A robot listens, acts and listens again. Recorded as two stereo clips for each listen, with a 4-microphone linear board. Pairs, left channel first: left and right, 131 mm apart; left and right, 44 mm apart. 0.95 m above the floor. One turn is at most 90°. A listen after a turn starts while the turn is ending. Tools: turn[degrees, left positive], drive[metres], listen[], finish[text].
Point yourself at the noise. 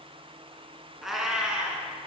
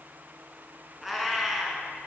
Action: turn[-30]
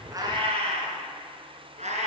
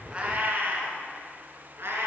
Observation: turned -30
Thought: So it is at 115° right.
Action: turn[-90]
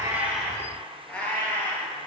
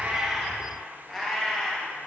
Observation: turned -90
Thought: The cat meowing is now 10° left.
Action: turn[10]
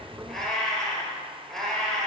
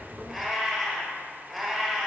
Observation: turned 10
Action: finish[Facing the cat meowing.]